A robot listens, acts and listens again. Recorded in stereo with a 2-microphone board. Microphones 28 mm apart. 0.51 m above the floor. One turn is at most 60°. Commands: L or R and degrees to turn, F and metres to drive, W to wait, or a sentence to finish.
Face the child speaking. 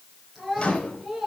L30
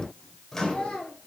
L60
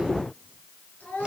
L60
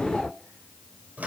L25
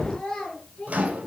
L15
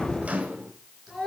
Facing the child speaking, over 4 m away.